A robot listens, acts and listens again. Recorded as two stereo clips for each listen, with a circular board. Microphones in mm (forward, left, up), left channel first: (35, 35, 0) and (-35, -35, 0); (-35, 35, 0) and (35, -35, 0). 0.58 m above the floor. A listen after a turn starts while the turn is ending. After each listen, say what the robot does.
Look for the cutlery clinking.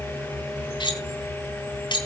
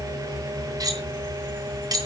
Found it: cutlery clinking, straight ahead, 2 to 4 m away.